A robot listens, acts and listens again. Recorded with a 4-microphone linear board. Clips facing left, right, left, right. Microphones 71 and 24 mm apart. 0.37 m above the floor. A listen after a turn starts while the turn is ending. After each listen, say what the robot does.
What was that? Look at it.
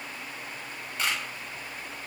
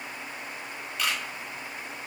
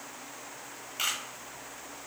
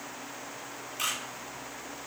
Turn 35° left.
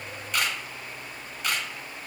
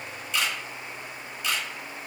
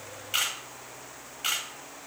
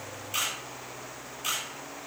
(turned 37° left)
Turn 105° left.
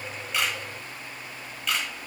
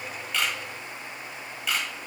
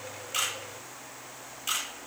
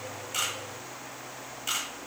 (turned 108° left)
Found it: a camera shutter, straight ahead.